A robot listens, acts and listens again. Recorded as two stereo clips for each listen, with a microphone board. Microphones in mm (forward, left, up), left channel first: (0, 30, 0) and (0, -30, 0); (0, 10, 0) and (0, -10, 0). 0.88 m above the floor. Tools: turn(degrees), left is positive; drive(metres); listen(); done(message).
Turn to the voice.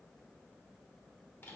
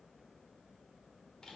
listen()
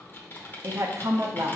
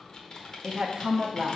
turn(degrees=-50)
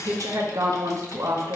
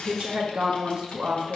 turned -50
turn(degrees=-70)
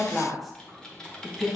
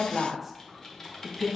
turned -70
done("Facing the woman speaking.")